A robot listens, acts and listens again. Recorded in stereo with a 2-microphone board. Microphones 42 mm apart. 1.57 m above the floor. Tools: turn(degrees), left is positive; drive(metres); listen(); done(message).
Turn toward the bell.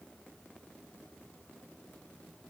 listen()
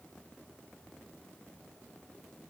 listen()
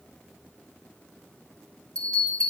turn(degrees=25)
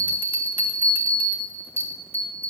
turn(degrees=130)
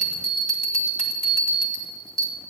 turn(degrees=15)
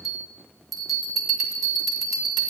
done("Found it: a bell, straight ahead, 2 to 4 m away.")